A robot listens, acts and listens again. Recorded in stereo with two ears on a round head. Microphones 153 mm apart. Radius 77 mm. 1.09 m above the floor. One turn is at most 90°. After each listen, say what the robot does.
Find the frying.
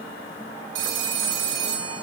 Keep listening.
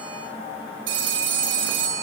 Keep listening.
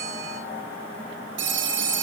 I can't make out frying to turn to.